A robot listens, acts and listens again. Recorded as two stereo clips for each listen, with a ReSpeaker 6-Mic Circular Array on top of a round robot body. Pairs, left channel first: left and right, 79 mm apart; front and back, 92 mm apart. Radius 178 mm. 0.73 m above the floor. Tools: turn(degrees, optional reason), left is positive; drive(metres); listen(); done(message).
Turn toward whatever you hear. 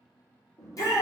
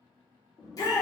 turn(degrees=45, reason="The shout: 45° left.")
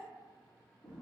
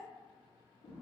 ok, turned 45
listen()
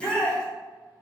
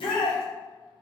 turn(degrees=10, reason="The shout is now 10° left.")
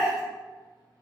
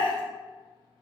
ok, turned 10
done("Found it: a shout, straight ahead.")